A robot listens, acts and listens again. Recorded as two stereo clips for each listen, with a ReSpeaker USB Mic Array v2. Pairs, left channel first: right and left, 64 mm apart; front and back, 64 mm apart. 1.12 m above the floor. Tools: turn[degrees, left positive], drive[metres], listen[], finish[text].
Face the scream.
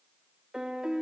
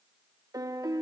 Action: listen[]
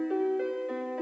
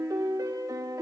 Action: listen[]
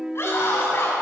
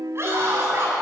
Thought: The scream: 135° right.
Action: turn[-135]
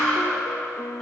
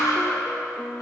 Thought: The scream is now 10° right.
Action: turn[-10]
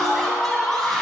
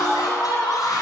Action: finish[Found it: a scream, straight ahead.]